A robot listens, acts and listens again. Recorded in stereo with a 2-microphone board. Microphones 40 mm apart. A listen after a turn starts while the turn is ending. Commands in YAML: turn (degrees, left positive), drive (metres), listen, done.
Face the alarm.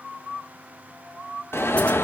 turn: 90
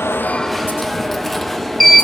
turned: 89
done: "Facing the alarm."